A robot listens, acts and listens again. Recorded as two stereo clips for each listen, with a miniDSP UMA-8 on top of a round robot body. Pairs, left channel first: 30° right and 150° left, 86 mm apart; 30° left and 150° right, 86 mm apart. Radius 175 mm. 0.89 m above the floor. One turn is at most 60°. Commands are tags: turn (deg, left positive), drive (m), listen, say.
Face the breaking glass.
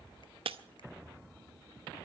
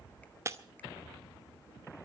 <turn deg="60"/>
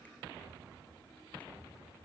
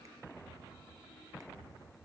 <turn deg="60"/>
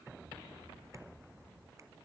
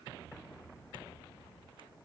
<turn deg="30"/>
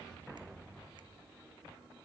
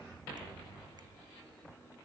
<say>Facing where the breaking glass came from. I can't hear it now.</say>